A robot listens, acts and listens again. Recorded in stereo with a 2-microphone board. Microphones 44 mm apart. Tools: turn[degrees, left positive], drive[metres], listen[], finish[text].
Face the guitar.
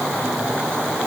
Action: listen[]
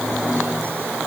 Action: listen[]
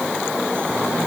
Action: finish[I can't make out a guitar to turn to.]